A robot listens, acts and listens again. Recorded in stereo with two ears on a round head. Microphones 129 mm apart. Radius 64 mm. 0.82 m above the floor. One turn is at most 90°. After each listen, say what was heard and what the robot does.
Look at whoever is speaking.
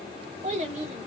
The child speaking: about 50° right or 130° right. Turn 50° right.
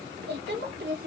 So it is at 80° right. Turn 80° right.
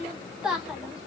Facing the child speaking, 1 to 2 m away.